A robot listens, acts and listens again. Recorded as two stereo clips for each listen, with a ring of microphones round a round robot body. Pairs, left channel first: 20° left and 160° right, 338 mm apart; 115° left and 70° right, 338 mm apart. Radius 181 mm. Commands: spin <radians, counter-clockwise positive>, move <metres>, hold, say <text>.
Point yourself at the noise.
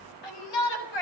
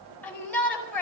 spin 0.44
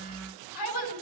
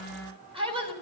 spin 0.17
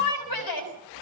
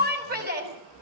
say Found it: a shout, straight ahead.